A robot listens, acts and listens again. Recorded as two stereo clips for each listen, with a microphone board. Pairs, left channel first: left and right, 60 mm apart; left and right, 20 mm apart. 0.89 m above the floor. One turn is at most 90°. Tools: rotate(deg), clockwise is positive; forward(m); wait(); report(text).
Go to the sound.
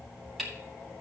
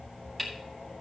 rotate(-30)
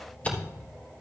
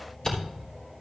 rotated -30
rotate(-90)
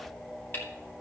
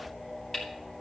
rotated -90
rotate(-35)
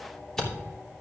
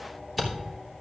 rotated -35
rotate(-10)
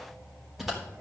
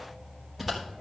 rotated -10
forward(1.0)
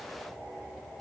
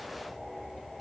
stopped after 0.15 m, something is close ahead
report("Something is in my way. I am facing the camera shutter but have not reached it.")